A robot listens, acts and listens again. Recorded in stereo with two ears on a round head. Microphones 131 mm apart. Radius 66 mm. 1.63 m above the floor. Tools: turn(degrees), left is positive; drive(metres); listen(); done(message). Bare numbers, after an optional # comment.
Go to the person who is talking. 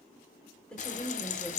turn(30)
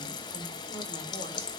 listen()
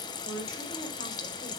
# So it is at 140° left.
turn(140)
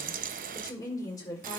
# The woman speaking is now 25° left.
turn(25)
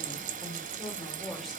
drive(1.0)
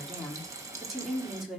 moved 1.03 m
drive(1.0)
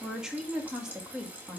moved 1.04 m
drive(1.0)
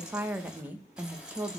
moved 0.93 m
# The woman speaking is now 15° right.
turn(-15)
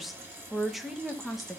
drive(1.0)
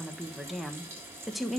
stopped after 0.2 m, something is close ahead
done("I am next to the woman speaking.")